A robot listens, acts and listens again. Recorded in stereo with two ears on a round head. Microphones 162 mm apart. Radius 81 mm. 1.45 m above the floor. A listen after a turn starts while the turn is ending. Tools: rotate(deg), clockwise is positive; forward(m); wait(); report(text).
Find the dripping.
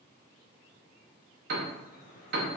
rotate(-40)
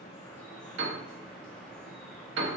report("Facing the dripping.")